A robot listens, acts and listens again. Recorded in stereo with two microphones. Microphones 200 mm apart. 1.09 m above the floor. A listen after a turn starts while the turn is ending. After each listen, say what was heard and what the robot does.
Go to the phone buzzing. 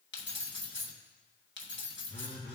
The phone buzzing: about 25° left or 155° left. Turn 25° left.
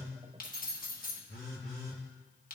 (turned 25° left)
So it is at 130° left. Turn 130° left.
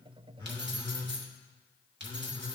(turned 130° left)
The phone buzzing is now 20° left. Turn 20° left.
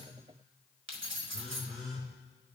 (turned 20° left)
Drive 1.0 m forward.
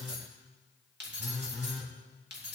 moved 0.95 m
Drive 1.0 m forward.
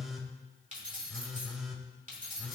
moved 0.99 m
Drive 1.0 m forward.
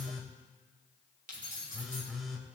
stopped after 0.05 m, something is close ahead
I am next to the phone buzzing.